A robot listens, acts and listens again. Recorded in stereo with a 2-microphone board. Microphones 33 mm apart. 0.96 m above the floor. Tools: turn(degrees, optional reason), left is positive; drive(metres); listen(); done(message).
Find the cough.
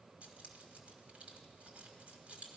listen()
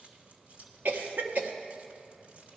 turn(degrees=-75, reason="The cough: about 75° right or 105° right.")
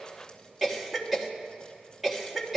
done("Facing the cough, 1 to 2 m away.")